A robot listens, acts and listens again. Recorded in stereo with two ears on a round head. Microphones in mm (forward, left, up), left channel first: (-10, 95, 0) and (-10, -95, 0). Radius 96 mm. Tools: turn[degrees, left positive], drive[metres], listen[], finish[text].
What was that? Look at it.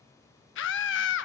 Thought: The scream: about 60° left or 120° left.
Action: turn[60]
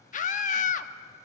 Thought: So it is at 40° left.
Action: turn[40]
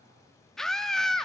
Action: finish[Found it: a scream, straight ahead.]